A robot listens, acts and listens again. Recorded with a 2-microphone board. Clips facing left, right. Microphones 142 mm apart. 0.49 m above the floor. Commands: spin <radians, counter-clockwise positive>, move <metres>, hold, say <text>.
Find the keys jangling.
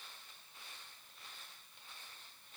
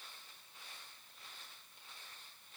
hold
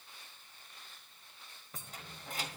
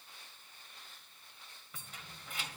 spin 0.70
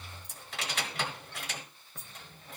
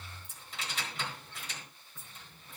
spin 1.66
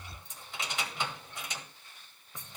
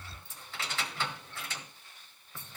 spin 0.35
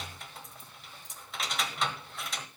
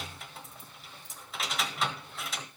say Found it: keys jangling, straight ahead.